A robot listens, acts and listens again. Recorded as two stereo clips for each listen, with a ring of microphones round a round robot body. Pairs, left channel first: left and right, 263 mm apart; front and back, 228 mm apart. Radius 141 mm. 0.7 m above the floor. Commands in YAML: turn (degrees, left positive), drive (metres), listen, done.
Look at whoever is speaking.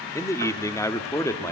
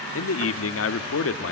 turn: 10
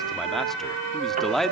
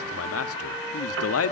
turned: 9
done: "Facing the man speaking, 1 to 2 m away."